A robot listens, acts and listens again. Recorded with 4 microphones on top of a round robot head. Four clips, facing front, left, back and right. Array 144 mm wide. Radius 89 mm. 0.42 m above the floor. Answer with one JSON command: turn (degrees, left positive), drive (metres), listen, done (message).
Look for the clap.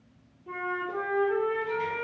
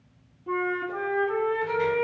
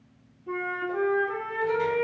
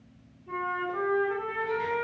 {"listen": true}
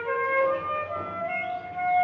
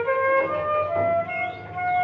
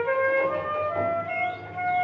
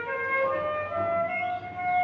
{"listen": true}
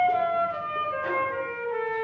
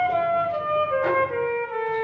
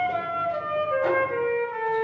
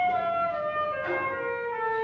{"done": "I can't make out a clap to turn to."}